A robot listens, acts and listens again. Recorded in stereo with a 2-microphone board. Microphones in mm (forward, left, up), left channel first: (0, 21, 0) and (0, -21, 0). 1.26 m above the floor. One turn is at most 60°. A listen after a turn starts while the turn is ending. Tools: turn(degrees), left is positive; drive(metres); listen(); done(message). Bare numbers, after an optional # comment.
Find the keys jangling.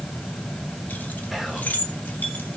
# The keys jangling: about 40° left or 140° left.
turn(40)
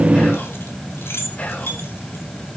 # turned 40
# So it is at 100° left.
turn(60)
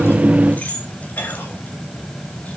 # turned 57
# The keys jangling is now 45° left.
turn(45)
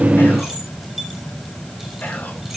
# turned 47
listen()
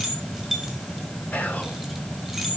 done("Found it: keys jangling, straight ahead.")